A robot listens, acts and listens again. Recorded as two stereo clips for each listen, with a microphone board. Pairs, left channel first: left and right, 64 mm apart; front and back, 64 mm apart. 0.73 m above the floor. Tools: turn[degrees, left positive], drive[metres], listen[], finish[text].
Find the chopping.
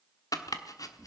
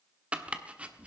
Thought: The chopping: 110° left.
Action: turn[110]
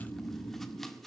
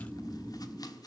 Action: listen[]
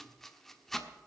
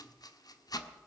Action: finish[Found it: chopping, straight ahead.]